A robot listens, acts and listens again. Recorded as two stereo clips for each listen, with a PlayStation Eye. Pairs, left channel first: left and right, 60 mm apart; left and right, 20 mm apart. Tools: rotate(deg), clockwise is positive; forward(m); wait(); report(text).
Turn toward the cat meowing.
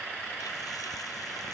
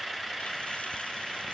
wait()
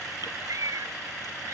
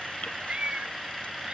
rotate(70)
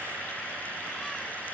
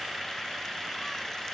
wait()
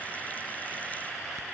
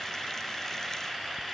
wait()
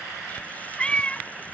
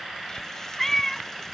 rotate(-25)
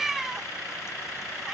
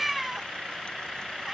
report("Found it: a cat meowing, straight ahead.")